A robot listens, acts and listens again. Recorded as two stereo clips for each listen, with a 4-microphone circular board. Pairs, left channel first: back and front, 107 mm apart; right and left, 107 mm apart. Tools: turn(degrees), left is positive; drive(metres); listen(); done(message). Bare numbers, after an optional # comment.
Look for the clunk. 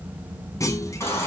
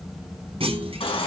# The clunk: 120° left.
turn(120)
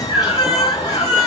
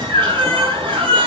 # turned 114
done("Facing where the clunk came from. I can't hear it now.")